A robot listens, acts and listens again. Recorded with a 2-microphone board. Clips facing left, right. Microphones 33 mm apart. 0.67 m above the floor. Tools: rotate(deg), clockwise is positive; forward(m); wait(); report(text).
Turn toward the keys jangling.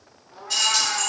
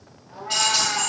rotate(40)
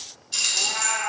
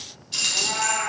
rotate(15)
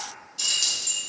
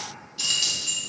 rotate(25)
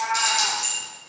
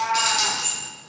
rotate(25)
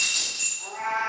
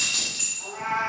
rotate(45)
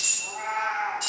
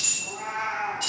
rotate(15)
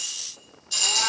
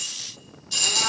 report("Facing the keys jangling, 1 to 2 m away.")